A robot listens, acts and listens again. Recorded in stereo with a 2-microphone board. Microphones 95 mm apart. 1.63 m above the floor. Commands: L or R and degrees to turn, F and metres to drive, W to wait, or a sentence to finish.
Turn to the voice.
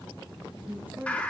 R20
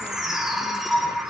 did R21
W
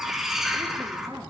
R140
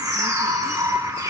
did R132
W
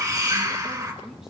W
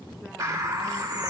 I heard a woman speaking from this way, but can't make it out now.